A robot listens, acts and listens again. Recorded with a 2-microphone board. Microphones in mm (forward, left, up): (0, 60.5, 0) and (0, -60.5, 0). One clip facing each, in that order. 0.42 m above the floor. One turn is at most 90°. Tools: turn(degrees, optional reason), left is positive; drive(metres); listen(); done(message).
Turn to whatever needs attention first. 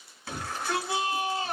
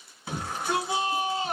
turn(degrees=-20, reason="The shout: about 20° right or 160° right.")
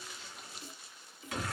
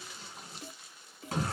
turn(degrees=-90, reason="So it is at 135° right.")
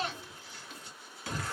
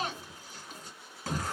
turn(degrees=-50, reason="The shout is now 50° right.")
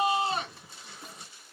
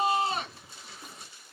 done("Facing the shout, 1 to 2 m away.")